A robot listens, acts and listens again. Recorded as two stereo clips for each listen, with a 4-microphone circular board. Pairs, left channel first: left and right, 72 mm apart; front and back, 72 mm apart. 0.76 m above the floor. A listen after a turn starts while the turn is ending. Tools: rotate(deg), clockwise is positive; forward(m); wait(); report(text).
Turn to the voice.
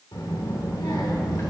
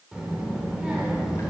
rotate(-100)
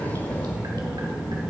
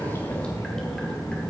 rotate(20)
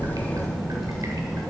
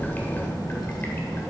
report("Found it: a child speaking, straight ahead.")